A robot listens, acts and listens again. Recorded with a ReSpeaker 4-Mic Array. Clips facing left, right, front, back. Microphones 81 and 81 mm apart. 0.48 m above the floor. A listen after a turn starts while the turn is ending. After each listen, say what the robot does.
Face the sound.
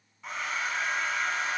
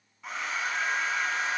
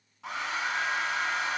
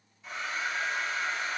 Facing the hair dryer, 1 to 2 m away.